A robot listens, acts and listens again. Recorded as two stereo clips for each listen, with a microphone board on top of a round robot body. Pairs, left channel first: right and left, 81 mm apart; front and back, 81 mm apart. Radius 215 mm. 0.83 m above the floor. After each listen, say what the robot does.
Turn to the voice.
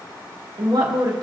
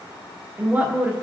Turn 110° left.
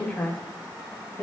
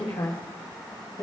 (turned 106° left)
Turn 45° right.
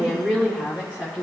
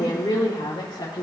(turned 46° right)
Turn 20° right.
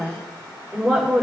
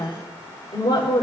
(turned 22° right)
Facing the woman speaking, 2 to 4 m away.